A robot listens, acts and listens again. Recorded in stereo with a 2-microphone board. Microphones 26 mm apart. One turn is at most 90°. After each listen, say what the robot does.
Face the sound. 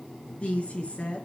Turn 55° left.
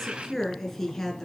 Turn 10° left.
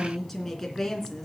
Turn 10° left.
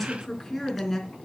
Turn 10° left.
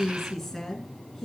Turn 10° left.
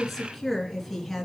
Found it: a woman speaking, straight ahead, 2 to 4 m away.